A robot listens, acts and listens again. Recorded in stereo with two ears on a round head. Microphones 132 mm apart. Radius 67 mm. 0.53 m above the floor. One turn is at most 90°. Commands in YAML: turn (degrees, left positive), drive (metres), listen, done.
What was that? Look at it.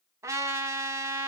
turn: -20
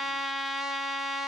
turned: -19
done: "Found it: a trumpet, straight ahead."